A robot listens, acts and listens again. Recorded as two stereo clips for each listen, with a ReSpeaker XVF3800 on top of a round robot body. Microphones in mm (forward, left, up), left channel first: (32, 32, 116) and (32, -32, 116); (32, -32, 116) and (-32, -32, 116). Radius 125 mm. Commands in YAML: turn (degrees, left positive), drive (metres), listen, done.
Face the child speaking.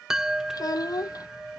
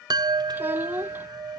turn: 120
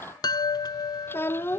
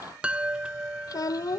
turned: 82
turn: 35
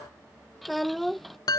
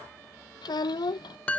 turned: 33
done: "Found it: a child speaking, straight ahead."